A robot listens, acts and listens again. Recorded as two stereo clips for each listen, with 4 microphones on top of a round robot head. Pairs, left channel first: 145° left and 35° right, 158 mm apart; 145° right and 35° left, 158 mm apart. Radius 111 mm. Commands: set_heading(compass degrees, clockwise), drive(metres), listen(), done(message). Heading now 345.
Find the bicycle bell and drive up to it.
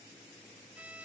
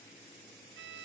listen()
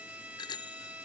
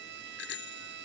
set_heading(135)
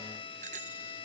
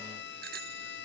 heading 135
set_heading(125)
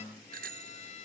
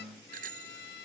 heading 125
drive(1.0)
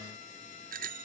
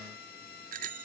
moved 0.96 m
drive(1.0)
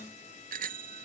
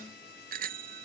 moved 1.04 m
drive(1.0)
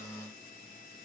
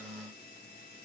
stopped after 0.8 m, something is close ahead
listen()
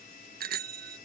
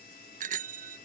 done("I am next to the bicycle bell.")